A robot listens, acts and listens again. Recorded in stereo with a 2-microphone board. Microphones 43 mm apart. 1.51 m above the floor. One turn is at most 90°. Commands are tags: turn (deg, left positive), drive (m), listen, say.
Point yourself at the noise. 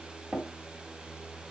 <turn deg="-40"/>
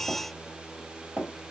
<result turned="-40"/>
<turn deg="-85"/>
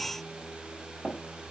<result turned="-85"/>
<say>Facing the tapping.</say>